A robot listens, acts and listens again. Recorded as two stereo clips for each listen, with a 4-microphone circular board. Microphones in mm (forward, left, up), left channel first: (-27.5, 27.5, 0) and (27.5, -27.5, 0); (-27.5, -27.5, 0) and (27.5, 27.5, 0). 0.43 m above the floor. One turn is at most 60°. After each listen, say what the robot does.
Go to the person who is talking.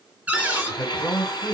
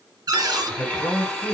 Turn 60° right.
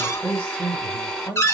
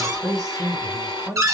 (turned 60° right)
Turn 60° right.
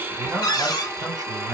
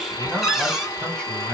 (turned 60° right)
Turn 50° right.
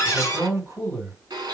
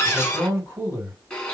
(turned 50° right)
Drive 1.0 m forward.
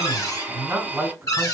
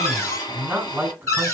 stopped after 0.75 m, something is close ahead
Turn 15° right.
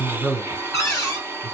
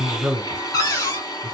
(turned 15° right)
I am next to the man speaking.